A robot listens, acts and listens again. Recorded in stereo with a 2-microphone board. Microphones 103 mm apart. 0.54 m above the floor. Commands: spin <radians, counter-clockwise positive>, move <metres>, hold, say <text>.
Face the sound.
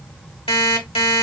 spin 1.13
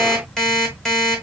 say Found it: an alarm clock, straight ahead, 1 to 2 m away.